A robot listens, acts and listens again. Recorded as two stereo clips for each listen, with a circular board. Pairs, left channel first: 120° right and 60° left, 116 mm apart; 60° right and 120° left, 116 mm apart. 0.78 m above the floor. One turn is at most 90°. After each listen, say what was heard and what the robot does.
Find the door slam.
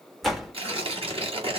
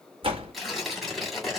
The door slam: 150° left. Turn 90° left.
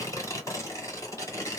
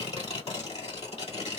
Nothing new. It was at 60° left. Turn 60° left.
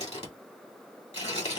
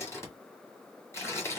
I heard a door slam from this way, but can't make it out now.